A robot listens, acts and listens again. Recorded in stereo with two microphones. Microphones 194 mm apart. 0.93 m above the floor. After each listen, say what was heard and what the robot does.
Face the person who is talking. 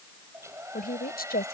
The woman speaking: about 55° left or 125° left. Turn 55° left.
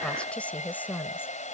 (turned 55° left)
So it is at 10° left. Turn 10° left.
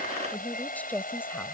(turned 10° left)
The woman speaking is now 10° left. Turn 10° left.
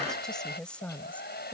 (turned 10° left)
Facing the woman speaking.